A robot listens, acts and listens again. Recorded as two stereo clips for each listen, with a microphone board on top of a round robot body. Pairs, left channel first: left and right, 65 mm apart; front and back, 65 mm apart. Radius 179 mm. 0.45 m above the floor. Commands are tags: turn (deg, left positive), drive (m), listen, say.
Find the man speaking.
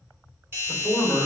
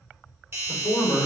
<turn deg="10"/>
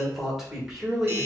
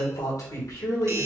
<say>Facing the man speaking, 2 to 4 m away.</say>